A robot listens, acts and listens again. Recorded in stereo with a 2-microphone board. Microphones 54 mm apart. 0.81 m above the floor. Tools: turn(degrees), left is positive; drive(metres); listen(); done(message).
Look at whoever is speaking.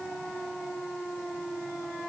listen()
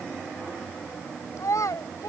turn(degrees=90)
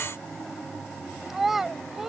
done("Found it: a child speaking, straight ahead.")